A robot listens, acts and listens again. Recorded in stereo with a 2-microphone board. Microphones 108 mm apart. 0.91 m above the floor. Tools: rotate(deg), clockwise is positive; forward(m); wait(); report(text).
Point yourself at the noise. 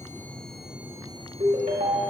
rotate(75)
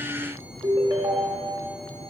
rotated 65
rotate(40)
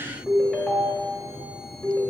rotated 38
report("Facing the ringtone, 1 to 2 m away.")